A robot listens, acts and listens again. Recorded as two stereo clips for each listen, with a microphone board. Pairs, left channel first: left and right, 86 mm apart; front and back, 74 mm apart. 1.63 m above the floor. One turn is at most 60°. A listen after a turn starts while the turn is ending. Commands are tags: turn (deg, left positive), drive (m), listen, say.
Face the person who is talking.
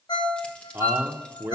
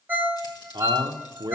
<turn deg="-60"/>
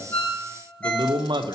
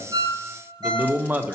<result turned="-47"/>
<turn deg="-60"/>
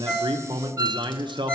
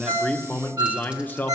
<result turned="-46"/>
<turn deg="-60"/>
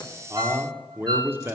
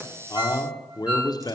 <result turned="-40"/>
<turn deg="-25"/>
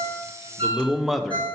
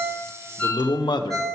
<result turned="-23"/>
<say>Found it: a man speaking, straight ahead, under 1 m away.</say>